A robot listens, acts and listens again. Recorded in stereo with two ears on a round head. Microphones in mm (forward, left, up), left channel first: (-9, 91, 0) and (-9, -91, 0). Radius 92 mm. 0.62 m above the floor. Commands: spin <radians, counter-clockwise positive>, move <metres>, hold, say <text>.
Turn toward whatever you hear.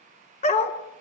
spin 0.61
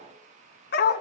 spin 2.18
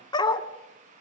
spin 0.35
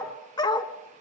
spin 0.35
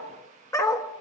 spin 0.26
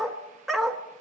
say Facing the dog barking.